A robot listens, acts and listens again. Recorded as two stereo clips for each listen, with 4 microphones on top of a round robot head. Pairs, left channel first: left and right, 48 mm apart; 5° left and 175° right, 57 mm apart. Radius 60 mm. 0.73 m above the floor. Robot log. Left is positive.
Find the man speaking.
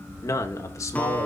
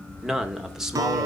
note: The man speaking: 105° left.
cmd yaw +105
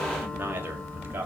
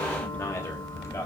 note: The man speaking is now 40° right.
cmd yaw -40
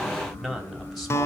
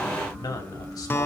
end: Found it: a man speaking, straight ahead.